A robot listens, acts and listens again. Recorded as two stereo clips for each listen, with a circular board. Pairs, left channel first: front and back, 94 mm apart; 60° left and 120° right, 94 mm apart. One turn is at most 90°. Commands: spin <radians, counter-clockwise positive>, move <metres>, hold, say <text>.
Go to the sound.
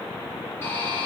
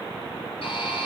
spin 1.05
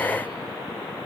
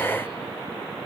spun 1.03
hold
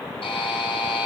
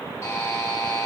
move 1.0
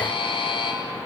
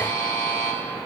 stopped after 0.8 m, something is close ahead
say Something is in my way. I am facing the buzzer but have not reached it.